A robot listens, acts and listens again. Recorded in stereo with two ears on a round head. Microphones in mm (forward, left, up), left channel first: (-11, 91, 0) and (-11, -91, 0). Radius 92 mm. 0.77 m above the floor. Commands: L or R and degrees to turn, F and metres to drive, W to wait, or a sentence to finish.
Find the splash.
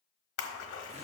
L90
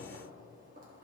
I heard a splash from this way, but can't make it out now.